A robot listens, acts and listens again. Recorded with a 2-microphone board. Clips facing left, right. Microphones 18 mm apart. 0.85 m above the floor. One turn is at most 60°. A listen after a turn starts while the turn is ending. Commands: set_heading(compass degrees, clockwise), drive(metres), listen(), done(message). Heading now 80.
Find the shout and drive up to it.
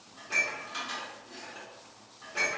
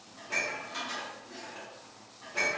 listen()
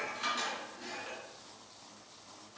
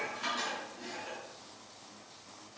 listen()
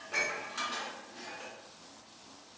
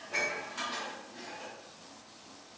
done("I can't make out a shout, only dishes clattering.")